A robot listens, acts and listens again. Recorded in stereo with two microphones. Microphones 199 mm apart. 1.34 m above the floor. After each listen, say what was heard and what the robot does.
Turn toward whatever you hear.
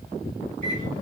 The microwave: about 70° left or 110° left. Turn 70° left.
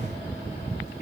So it is at 35° left. Turn 35° left.
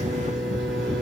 Found it: a microwave, straight ahead.